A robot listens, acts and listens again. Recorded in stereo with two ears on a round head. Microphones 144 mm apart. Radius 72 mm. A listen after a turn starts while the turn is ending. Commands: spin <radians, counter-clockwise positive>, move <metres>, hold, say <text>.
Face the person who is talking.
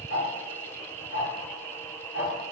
hold
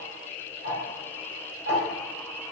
hold
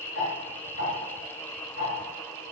say I can't make out anyone speaking to turn to.